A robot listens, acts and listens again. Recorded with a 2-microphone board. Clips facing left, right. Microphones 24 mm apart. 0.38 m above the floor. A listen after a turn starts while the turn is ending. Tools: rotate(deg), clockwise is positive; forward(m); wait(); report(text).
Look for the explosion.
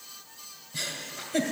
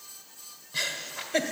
wait()
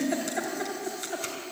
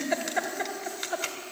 wait()
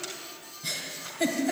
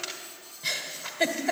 report("I can't make out an explosion, only a giggle.")